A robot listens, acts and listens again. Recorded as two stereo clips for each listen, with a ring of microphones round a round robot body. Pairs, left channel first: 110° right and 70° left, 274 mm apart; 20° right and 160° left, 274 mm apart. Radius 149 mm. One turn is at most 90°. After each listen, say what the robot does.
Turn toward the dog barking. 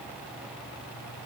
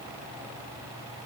Keep listening.
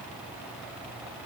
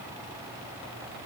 Keep listening.
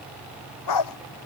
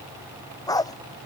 Turn 90° right.
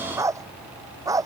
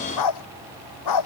Turn 10° right.
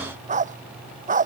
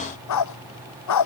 Found it: a dog barking, straight ahead.